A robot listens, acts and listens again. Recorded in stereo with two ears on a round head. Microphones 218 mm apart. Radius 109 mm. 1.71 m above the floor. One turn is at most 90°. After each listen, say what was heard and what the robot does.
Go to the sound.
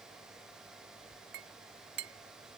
The clink: about 45° right or 135° right. Turn 45° right.
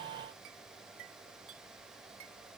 So it is at 85° right. Turn 85° right.
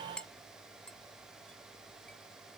Drive 1.0 m forward.
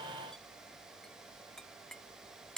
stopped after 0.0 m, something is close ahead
Something is in my way. I am facing the clink but have not reached it.